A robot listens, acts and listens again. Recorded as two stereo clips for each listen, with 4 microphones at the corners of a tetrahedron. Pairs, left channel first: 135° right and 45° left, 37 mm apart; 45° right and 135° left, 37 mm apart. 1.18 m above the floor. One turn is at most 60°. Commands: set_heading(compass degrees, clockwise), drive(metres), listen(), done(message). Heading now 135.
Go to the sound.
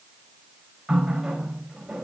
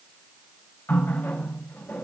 set_heading(170)
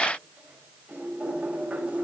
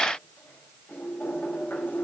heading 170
set_heading(180)
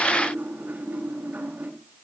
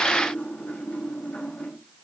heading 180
drive(1.0)
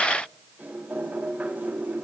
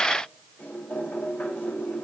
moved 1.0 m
drive(1.0)
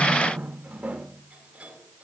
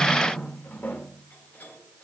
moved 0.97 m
set_heading(190)
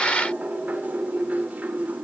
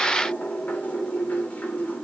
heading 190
drive(1.0)
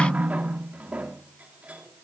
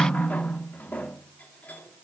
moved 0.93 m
drive(1.0)
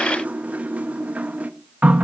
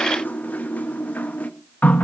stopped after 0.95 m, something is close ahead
done("I am next to the running tap.")